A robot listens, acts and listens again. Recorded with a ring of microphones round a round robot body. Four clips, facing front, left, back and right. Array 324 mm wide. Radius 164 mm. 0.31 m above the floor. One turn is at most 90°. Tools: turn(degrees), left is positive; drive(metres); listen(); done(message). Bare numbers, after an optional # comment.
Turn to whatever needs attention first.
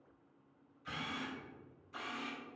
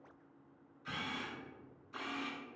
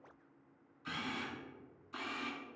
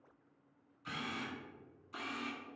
listen()
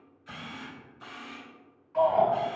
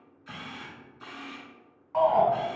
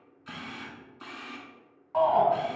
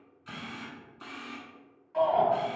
# The shout: 145° left.
turn(90)
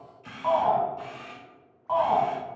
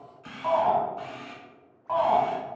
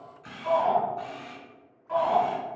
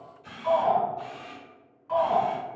# The shout is now 40° left.
turn(40)
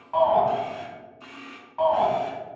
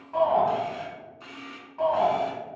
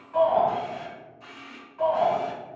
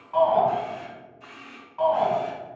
# The shout is now 10° right.
turn(-10)
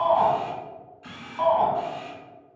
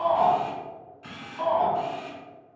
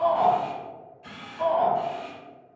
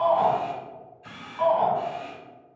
done("Found it: a shout, straight ahead.")